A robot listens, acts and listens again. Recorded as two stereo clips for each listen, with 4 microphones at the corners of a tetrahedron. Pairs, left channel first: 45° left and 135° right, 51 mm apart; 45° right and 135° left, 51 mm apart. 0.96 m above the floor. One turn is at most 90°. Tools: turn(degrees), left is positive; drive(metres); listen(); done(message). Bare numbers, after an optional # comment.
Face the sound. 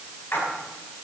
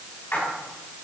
done("Found it: a splash, straight ahead.")